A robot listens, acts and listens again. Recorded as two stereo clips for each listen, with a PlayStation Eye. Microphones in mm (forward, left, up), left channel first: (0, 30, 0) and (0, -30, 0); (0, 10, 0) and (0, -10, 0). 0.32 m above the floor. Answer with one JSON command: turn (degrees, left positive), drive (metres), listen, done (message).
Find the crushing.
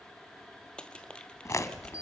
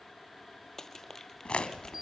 {"turn": 15}
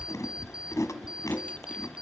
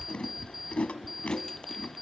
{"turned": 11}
{"listen": true}
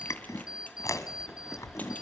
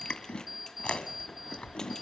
{"listen": true}
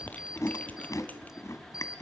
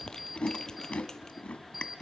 {"done": "I heard crushing, but can't make it out now. It was about 5° left or 155° left."}